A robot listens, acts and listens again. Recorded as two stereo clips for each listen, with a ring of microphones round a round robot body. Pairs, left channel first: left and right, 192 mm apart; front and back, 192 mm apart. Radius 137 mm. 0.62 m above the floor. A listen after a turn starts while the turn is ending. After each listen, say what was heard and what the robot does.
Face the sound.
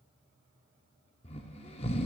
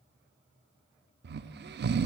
The snoring: 155° left. Turn 155° left.
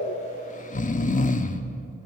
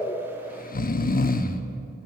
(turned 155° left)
The snoring is now 40° left. Turn 40° left.
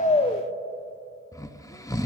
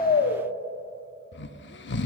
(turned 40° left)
The snoring is now 15° left. Turn 15° left.
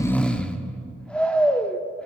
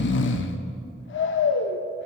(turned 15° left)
Facing the snoring.